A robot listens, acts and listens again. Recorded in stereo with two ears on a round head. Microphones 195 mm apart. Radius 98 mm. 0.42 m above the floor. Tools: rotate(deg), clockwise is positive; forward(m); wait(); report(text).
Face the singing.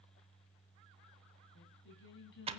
rotate(-55)
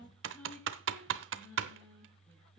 report("Found it: singing, straight ahead.")